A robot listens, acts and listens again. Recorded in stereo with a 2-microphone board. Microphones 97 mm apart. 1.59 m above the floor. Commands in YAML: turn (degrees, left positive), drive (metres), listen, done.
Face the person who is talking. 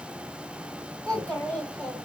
turn: 30
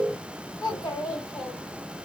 turn: 135
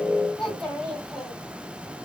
done: "Found it: a child speaking, straight ahead, 1 to 2 m away."